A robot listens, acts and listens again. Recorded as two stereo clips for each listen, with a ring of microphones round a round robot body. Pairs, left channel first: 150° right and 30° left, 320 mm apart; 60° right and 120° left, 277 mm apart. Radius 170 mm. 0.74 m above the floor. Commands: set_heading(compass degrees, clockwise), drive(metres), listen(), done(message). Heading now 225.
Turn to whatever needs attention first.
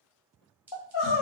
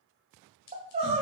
set_heading(35)
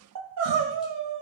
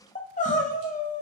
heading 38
done("Facing the crying, under 1 m away.")